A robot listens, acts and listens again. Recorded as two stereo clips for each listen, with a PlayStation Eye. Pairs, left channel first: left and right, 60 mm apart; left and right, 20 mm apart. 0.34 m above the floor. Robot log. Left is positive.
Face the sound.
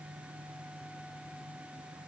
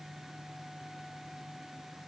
cmd idle
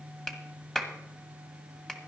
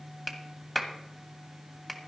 cmd yaw +30
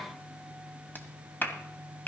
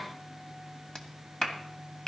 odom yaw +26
note: So it is at 145° left.
cmd yaw +145
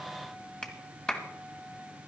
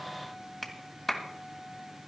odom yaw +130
note: The clap is now 15° left.
cmd yaw +15
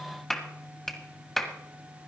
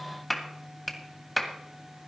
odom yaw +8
end: Found it: a clap, straight ahead, 1 to 2 m away.